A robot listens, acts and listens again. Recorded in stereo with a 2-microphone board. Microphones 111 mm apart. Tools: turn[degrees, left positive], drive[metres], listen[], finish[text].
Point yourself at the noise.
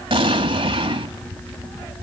Thought: The explosion: about 50° right or 130° right.
Action: turn[-50]
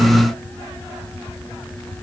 Action: listen[]
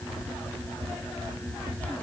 Action: finish[I heard an explosion, but can't make it out now. It was about straight ahead or 80° right.]